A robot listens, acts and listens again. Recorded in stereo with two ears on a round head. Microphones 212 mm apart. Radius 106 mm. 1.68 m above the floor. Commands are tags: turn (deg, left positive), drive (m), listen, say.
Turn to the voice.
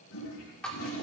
<listen/>
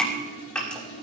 <listen/>
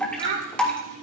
<turn deg="-55"/>
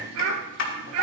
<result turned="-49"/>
<turn deg="-75"/>
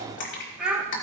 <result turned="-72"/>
<say>Facing the child speaking.</say>